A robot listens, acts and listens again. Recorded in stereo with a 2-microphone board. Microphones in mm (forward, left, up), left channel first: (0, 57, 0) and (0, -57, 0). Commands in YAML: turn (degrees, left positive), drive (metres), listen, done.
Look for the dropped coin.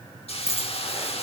turn: 25
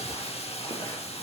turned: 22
listen: true
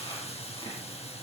done: "I heard a dropped coin, but can't make it out now. It was about 5° left or 130° left."